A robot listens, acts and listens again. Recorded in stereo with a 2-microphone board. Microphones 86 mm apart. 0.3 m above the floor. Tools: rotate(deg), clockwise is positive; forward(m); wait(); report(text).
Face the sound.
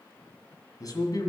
rotate(-50)
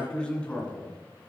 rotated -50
rotate(-15)
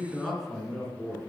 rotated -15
report("Facing the man speaking.")